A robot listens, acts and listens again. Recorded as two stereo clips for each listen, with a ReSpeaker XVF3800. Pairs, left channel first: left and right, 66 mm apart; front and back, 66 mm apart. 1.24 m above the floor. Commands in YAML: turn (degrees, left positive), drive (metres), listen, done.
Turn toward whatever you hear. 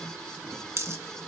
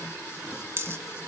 turn: -135
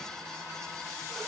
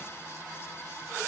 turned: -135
done: "I heard a dropped coin from this way, but can't make it out now."